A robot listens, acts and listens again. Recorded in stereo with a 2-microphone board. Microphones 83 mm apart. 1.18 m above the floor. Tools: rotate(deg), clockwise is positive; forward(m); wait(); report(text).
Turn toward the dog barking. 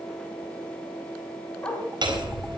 rotate(-30)
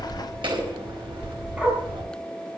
rotate(15)
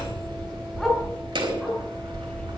report("Facing the dog barking.")